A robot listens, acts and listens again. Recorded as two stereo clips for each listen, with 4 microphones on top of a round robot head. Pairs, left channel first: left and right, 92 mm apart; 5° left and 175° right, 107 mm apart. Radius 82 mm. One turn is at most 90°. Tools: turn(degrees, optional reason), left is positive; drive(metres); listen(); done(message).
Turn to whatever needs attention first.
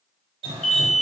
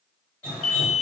turn(degrees=10, reason="The alarm: 10° left.")
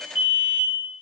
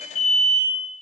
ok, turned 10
done("Found it: an alarm, straight ahead.")